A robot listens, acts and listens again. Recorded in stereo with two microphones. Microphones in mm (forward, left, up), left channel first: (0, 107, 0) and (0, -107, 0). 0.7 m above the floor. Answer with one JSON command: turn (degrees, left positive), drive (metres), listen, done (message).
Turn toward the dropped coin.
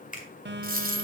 {"turn": -40}
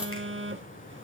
{"listen": true}
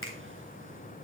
{"done": "I heard a dropped coin, but can't make it out now. It was about straight ahead or 100° right."}